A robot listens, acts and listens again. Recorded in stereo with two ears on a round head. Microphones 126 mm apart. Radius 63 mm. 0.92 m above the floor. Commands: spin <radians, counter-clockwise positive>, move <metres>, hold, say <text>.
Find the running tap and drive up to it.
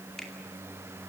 hold
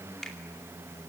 hold
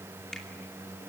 say I can't make out a running tap, only a finger snap.